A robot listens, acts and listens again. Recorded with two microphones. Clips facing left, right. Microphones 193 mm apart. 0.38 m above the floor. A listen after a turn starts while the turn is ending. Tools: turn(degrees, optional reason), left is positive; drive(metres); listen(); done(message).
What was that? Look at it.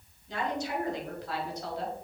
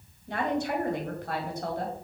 turn(degrees=-50, reason="The woman speaking: about 50° right or 130° right.")
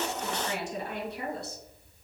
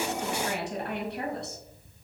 turn(degrees=-70, reason="So it is at 70° right.")
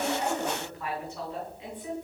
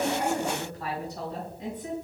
turn(degrees=-40, reason="The woman speaking is now 40° right.")
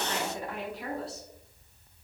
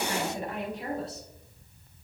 turn(degrees=-25, reason="The woman speaking is now 25° right.")
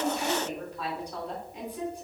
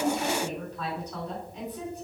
turn(degrees=10, reason="The woman speaking is now 10° left.")
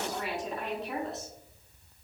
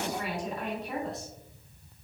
done("Facing the woman speaking, 2 to 4 m away.")